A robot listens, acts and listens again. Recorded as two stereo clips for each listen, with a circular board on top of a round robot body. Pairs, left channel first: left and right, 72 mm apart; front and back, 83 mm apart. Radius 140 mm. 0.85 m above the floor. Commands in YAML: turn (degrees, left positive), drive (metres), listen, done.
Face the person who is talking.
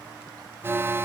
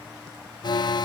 listen: true
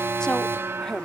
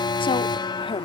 turn: 10
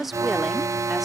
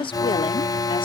done: "Facing the woman speaking."